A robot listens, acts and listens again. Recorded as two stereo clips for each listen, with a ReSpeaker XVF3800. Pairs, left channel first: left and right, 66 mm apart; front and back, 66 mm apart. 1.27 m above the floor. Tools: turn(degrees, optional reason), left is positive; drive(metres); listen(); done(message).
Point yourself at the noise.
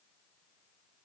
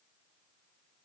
listen()
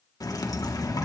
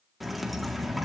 turn(degrees=95, reason="The dripping: 95° left.")
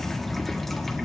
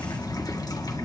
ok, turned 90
done("Found it: dripping, straight ahead, 1 to 2 m away.")